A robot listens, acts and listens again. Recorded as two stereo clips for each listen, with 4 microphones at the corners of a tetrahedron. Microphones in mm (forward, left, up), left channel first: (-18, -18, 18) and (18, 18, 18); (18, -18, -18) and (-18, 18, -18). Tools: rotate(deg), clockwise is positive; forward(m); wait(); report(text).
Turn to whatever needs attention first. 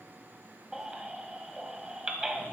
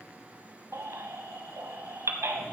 rotate(-120)
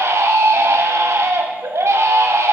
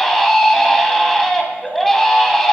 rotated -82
rotate(-40)
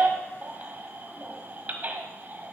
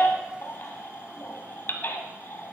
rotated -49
rotate(10)
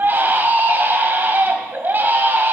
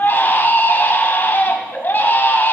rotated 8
report("Found it: a baby crying, straight ahead.")